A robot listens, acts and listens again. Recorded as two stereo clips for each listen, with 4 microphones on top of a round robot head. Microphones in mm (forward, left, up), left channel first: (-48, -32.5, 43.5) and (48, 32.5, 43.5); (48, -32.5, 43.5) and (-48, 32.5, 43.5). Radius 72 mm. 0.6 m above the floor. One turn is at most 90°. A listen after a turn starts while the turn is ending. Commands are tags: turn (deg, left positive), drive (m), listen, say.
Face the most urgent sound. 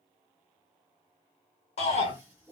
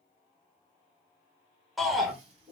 <turn deg="-90"/>
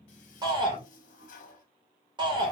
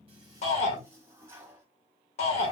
<turn deg="-15"/>
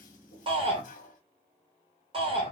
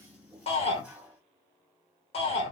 <say>Found it: a shout, straight ahead, 2 to 4 m away.</say>